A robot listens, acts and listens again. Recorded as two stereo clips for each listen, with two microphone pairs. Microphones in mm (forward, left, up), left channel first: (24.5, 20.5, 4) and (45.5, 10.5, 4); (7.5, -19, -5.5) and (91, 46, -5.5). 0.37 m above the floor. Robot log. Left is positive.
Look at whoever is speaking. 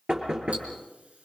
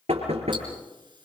cmd idle
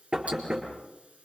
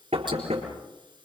cmd idle
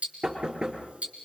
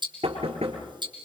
end: I can't make out anyone speaking to turn to.